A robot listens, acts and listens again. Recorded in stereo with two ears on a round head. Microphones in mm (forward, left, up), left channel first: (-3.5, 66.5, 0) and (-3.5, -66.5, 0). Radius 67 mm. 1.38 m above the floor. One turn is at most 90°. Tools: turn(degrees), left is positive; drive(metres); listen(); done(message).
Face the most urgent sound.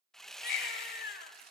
turn(degrees=70)
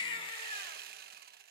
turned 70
turn(degrees=35)
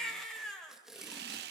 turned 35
done("Found it: a baby crying, straight ahead, 2 to 4 m away.")